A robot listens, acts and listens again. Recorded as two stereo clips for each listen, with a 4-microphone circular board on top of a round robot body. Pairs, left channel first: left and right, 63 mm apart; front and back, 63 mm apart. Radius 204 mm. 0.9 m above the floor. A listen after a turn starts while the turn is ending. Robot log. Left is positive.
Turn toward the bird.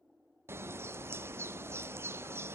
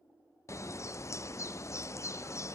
note: The bird: 40° right.
cmd yaw -40
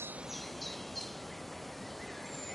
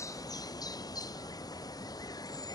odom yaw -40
end: Found it: a bird, straight ahead, under 1 m away.